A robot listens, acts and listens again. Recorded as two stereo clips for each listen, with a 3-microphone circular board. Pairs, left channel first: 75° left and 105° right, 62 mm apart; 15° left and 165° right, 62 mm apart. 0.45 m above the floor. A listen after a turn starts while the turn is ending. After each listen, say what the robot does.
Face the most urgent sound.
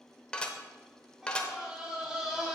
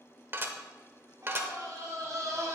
Turn 180° left.
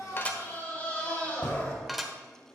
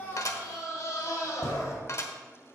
Turn 15° left.
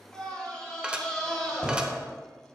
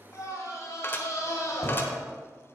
Found it: a scream, straight ahead.